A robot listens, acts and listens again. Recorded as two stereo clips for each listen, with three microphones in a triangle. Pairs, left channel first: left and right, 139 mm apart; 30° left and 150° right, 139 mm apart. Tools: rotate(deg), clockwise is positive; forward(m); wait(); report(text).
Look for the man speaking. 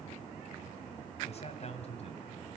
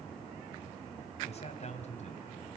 rotate(-55)
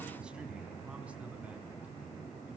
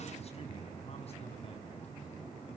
wait()
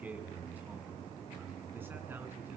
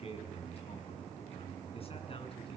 rotate(15)
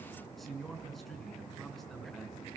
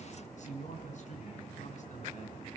report("Facing the man speaking, over 4 m away.")